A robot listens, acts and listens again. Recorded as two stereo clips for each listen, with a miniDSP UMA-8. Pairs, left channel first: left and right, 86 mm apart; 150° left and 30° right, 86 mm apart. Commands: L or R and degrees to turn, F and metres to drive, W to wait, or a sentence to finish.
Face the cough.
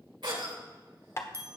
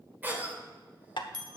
R95
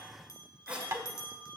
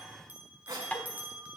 R15
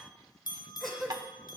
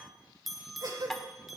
Found it: a cough, straight ahead, 2 to 4 m away.